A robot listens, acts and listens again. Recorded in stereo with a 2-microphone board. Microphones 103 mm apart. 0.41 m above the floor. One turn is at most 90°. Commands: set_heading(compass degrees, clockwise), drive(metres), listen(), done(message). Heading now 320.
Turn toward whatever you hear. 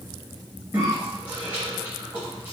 set_heading(335)
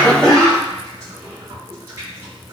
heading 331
set_heading(61)
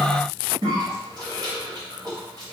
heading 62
set_heading(117)
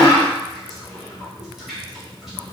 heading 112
done("Found it: a cough, straight ahead.")